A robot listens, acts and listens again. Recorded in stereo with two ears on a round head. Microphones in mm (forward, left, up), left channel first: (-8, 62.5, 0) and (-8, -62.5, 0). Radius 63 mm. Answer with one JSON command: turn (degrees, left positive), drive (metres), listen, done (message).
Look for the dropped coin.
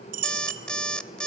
{"turn": -70}
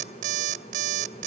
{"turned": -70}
{"listen": true}
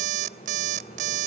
{"done": "I heard a dropped coin, but can't make it out now. It was about straight ahead or 40° right."}